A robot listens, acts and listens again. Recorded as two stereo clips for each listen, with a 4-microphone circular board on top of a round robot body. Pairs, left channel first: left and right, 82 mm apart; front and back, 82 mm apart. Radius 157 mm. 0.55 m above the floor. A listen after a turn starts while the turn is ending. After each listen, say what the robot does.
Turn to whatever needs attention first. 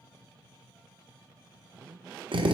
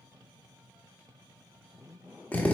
Keep listening.
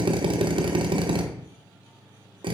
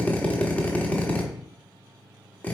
Keep listening.
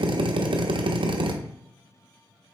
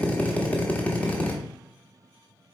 I can't make out anything urgent, only a drill.